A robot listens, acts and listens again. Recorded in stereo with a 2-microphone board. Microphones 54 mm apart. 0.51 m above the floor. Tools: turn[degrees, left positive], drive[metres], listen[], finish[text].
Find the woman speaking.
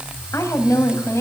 Thought: The woman speaking: about 60° left or 120° left.
Action: turn[60]
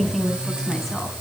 Action: finish[Facing the woman speaking.]